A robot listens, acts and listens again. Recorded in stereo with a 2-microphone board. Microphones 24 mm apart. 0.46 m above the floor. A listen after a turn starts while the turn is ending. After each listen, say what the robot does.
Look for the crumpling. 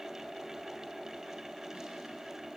Keep listening.
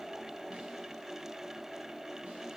Keep listening.
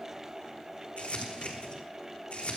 Turn 90° left.
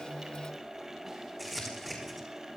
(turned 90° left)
Found it: crumpling, straight ahead.